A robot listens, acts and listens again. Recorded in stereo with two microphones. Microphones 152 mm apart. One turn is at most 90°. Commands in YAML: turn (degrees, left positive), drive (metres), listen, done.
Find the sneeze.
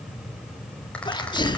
turn: 30
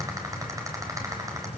listen: true
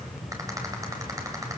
done: "I heard a sneeze, but can't make it out now. It was about straight ahead or 120° left."